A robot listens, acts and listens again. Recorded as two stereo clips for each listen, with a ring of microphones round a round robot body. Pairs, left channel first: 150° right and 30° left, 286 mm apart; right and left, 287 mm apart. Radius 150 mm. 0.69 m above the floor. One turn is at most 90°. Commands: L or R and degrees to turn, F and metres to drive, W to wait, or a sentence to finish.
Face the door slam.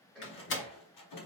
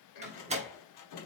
L90
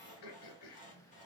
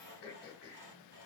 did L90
L70
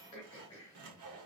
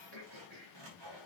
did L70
I heard a door slam from this way, but can't make it out now.